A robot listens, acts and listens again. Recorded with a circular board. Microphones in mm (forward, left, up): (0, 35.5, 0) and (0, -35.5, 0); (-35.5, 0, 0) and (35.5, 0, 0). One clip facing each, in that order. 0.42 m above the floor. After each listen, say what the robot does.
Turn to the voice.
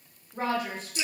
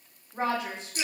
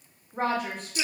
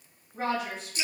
Turn 150° right.
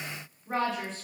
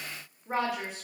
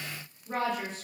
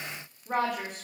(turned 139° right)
Turn 10° right.
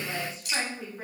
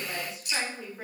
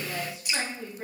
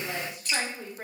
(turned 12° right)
Found it: a woman speaking, straight ahead.